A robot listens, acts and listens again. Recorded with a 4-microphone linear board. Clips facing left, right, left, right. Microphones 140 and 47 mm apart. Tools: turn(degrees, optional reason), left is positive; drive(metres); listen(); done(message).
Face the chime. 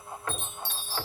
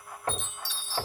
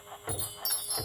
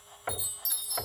turn(degrees=55, reason="The chime: about 55° left or 125° left.")
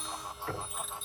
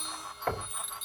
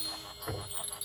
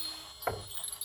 done("Found it: a chime, straight ahead.")